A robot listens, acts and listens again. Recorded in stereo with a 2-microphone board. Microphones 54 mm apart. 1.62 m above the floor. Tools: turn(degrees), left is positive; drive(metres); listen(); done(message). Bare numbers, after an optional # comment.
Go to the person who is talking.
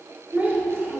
# The child speaking: about 40° right or 140° right.
turn(-40)
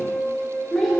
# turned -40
drive(1.0)
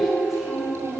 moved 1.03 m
drive(1.0)
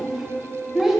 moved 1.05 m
drive(1.0)
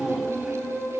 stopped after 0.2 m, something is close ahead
# The child speaking is now 15° right.
turn(-15)
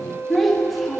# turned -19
done("Arrived at the child speaking, straight ahead.")